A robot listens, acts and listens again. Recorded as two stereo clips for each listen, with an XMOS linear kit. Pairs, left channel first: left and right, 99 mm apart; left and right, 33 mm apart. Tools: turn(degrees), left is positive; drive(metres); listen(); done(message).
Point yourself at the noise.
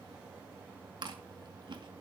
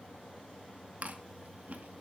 turn(degrees=-55)
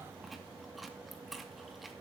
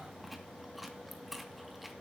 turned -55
done("Found it: chewing, straight ahead.")